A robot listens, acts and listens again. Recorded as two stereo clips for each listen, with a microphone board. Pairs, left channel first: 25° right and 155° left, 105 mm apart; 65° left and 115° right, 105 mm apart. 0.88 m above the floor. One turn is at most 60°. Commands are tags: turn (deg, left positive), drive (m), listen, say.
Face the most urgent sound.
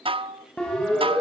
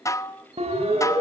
<turn deg="-60"/>
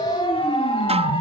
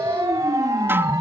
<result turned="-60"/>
<turn deg="-55"/>
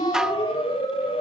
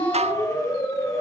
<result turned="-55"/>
<turn deg="10"/>
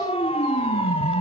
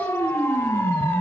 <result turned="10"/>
<say>Found it: a siren, straight ahead.</say>